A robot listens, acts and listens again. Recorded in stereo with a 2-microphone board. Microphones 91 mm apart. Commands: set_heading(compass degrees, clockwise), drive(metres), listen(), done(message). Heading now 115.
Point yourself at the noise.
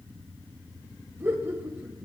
set_heading(140)
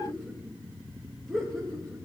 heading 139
done("Facing the laughter, over 4 m away.")